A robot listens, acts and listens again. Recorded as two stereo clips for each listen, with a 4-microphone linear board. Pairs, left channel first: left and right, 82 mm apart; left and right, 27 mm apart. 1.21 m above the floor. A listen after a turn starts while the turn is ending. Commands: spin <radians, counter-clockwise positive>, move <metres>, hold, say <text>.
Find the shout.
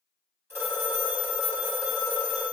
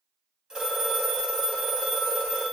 hold
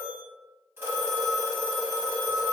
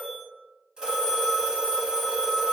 hold
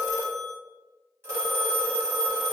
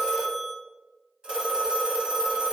say I can't make out a shout, only a phone ringing.